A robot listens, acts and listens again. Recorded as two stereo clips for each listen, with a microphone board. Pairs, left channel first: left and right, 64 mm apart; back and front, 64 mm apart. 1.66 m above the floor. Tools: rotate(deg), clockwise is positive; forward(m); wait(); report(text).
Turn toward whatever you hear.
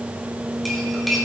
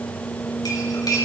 rotate(-180)
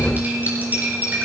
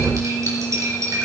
rotate(30)
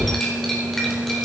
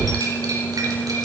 report("Found it: cutlery clinking, straight ahead.")